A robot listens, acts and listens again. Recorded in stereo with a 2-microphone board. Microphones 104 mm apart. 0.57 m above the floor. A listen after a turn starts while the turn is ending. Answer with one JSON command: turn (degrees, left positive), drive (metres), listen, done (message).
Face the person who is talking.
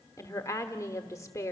{"turn": 30}
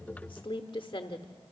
{"turn": 115}
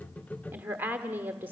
{"turn": -20}
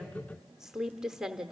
{"done": "Found it: a woman speaking, straight ahead."}